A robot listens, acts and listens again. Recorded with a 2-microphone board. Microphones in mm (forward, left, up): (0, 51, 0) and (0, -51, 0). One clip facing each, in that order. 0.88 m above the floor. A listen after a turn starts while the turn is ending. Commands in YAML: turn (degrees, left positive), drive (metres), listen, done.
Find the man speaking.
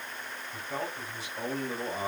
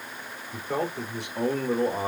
turn: -60
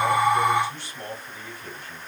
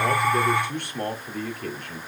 turn: -65
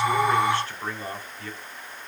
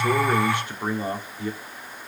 turn: -20
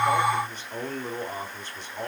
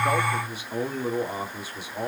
turn: -10
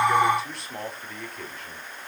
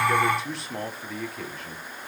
done: "Facing the man speaking, 2 to 4 m away."